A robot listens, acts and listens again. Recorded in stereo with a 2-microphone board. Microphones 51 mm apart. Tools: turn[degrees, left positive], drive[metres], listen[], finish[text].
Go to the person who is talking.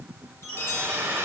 Action: listen[]
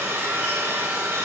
Action: listen[]
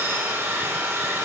Action: finish[I can't make out anyone speaking to turn to.]